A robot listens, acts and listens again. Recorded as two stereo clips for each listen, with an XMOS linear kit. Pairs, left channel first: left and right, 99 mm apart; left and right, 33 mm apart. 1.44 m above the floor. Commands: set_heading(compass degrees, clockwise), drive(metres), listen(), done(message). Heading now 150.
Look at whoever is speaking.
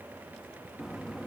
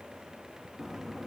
listen()
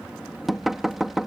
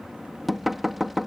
listen()
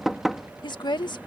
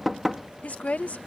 set_heading(105)
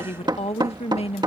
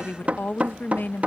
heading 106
set_heading(16)
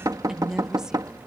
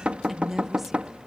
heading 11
done("Found it: a woman speaking, straight ahead.")